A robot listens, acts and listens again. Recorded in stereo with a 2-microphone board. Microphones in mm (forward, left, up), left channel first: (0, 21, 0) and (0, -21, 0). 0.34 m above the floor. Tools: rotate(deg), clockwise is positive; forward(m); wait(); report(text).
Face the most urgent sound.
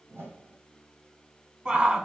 rotate(20)
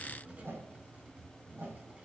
wait()
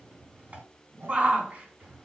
rotate(135)
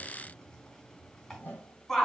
report("Found it: a shout, straight ahead.")